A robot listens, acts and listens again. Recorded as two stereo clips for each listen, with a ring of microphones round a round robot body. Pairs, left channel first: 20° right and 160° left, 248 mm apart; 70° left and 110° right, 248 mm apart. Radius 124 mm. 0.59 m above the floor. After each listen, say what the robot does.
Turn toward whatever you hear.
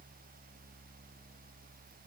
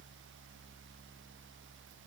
Keep listening.
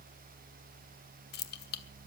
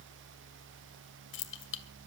Turn 25° left.
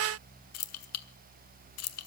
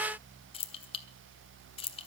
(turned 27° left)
Facing the keys jangling, 1 to 2 m away.